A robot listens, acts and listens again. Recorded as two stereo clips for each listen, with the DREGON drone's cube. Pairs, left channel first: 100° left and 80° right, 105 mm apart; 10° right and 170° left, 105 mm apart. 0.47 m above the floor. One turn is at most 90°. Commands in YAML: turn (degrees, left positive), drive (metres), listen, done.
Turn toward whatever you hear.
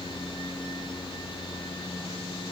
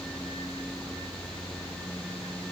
listen: true
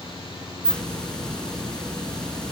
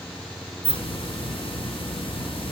turn: 20
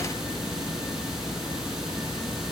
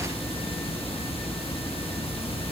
turn: 10
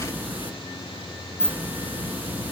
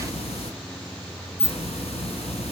done: "Facing the hiss."